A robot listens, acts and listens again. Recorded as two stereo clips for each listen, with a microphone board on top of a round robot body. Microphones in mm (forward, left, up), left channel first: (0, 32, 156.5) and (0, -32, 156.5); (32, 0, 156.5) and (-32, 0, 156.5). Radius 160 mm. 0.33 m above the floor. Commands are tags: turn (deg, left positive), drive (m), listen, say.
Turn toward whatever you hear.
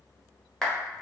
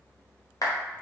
<turn deg="10"/>
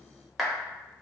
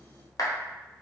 <say>Facing the clap, 1 to 2 m away.</say>